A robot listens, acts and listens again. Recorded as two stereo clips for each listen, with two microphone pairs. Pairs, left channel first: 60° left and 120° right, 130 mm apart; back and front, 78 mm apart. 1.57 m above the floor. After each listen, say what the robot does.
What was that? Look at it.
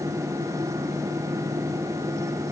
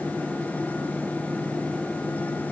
Keep listening.
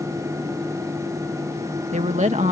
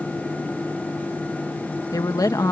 Turn 145° right.
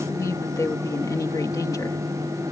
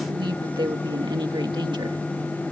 Found it: a woman speaking, straight ahead.